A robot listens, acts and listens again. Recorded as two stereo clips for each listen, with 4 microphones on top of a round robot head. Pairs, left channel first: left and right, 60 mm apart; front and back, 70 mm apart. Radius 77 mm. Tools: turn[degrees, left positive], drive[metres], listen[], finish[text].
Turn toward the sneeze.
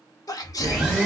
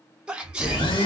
Thought: The sneeze: 100° left.
Action: turn[100]
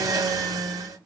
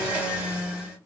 Action: finish[Facing where the sneeze came from. I can't hear it now.]